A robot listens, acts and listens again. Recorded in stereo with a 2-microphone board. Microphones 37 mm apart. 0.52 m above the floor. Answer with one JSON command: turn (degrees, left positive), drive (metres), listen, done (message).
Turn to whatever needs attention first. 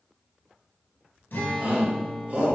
{"turn": -35}
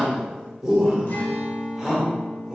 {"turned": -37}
{"turn": -10}
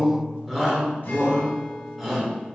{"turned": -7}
{"done": "Found it: a shout, straight ahead."}